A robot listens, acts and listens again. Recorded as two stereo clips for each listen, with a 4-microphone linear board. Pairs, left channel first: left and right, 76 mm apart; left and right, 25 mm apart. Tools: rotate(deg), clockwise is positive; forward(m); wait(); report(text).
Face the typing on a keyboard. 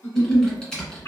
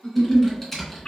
rotate(-30)
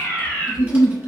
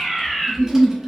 wait()
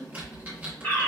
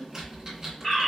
rotate(20)
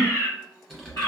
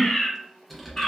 report("Found it: typing on a keyboard, straight ahead, 1 to 2 m away.")